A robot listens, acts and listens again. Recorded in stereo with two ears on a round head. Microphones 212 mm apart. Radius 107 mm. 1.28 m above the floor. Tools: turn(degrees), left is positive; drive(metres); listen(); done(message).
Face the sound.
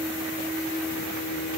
listen()
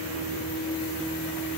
listen()
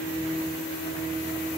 done("I can't make out anything.")